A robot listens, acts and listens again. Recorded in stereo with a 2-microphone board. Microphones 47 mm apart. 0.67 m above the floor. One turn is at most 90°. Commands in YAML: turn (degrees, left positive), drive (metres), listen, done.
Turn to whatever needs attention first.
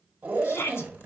turn: 55
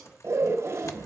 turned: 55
listen: true
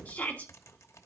turn: 40
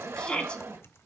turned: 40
turn: 25
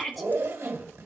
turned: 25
done: "Found it: a shout, straight ahead."